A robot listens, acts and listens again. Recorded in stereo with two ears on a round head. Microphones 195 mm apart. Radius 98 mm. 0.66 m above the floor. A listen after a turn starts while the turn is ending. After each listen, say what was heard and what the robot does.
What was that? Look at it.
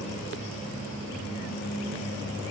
Keep listening.
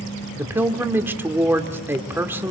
Turn 30° right.
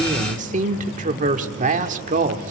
So it is at 140° right. Turn 140° right.
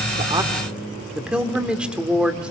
Facing the woman speaking.